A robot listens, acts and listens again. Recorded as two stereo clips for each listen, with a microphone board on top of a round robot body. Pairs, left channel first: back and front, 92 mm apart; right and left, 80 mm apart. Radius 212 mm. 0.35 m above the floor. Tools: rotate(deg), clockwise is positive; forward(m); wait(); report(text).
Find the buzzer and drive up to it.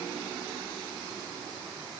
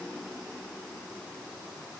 wait()
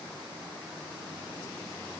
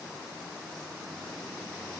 wait()
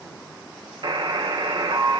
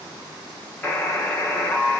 rotate(25)
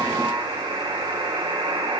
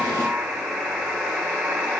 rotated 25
forward(1.0)
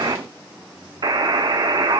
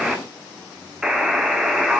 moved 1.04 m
rotate(-10)
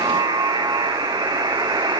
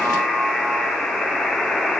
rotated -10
forward(1.0)
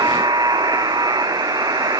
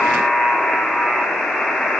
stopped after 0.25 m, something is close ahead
report("I am next to the buzzer.")